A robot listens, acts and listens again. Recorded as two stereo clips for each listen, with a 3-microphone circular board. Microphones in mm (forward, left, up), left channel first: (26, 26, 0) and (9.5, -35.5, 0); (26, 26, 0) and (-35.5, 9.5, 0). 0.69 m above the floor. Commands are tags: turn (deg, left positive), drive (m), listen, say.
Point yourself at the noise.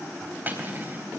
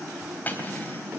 <turn deg="-45"/>
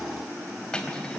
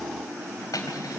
<say>Facing the cutlery clinking.</say>